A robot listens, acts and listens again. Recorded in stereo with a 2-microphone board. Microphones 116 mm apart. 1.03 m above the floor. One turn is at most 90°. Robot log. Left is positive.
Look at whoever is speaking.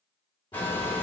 note: The child speaking: about 50° left or 130° left.
cmd yaw +50
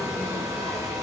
note: So it is at 55° left.
cmd yaw +55
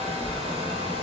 note: The child speaking is now 35° right.
cmd yaw -35
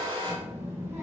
note: The child speaking is now 20° right.
cmd yaw -20
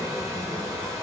end: Facing the child speaking, 1 to 2 m away.